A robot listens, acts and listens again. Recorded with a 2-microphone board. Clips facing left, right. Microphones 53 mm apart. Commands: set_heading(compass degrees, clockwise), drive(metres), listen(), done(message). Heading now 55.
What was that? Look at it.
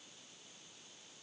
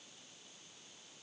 listen()
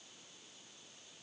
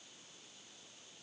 listen()
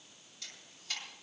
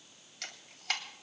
set_heading(130)
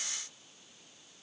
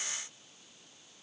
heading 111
listen()
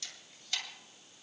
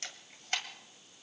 set_heading(156)
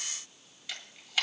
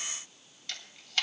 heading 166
set_heading(156)
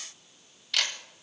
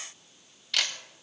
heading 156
done("Found it: a camera shutter, straight ahead.")